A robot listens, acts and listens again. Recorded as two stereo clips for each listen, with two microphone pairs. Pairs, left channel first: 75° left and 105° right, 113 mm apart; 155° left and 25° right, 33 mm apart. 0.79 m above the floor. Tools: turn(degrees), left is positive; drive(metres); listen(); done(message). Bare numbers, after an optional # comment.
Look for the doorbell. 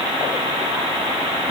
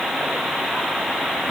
listen()
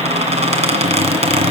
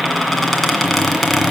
listen()
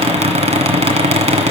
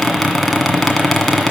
done("I can't make out a doorbell to turn to.")